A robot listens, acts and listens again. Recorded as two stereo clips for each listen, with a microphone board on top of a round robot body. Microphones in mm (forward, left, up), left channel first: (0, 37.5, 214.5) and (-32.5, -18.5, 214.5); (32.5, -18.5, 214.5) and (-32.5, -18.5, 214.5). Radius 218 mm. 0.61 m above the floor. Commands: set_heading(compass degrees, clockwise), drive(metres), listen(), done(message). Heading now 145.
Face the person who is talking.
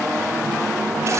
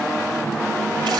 listen()
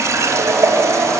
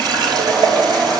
listen()
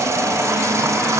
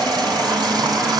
done("I can't make out anyone speaking to turn to.")